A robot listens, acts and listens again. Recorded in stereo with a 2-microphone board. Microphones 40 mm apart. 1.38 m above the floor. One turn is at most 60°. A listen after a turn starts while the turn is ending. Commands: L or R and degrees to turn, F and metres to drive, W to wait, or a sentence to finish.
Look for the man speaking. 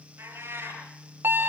W
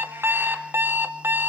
W
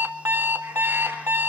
I can't make out a man speaking, only a cat meowing and an alarm clock.